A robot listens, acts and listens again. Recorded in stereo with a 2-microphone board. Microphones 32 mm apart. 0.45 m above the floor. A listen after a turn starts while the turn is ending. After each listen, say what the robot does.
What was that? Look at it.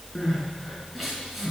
Turn 30° left.
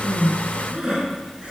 Turn 30° right.
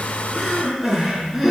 Facing the crying, over 4 m away.